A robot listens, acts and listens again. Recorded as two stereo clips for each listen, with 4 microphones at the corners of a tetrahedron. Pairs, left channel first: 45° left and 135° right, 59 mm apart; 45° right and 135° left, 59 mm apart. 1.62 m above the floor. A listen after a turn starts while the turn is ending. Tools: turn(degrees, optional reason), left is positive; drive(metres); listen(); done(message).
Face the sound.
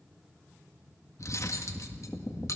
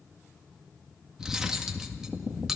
turn(degrees=55, reason="The cutlery clinking: 55° left.")
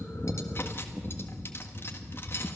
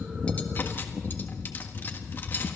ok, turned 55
done("Facing the cutlery clinking.")